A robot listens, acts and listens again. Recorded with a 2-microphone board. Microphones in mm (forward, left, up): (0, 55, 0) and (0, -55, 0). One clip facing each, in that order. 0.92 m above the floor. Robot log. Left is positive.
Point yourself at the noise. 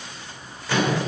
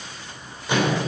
note: The microwave: about 20° right or 160° right.
cmd yaw -20
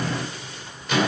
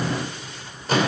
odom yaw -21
note: So it is at 140° right.
cmd yaw -140
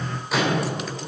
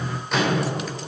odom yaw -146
end: Found it: a microwave, straight ahead, 2 to 4 m away.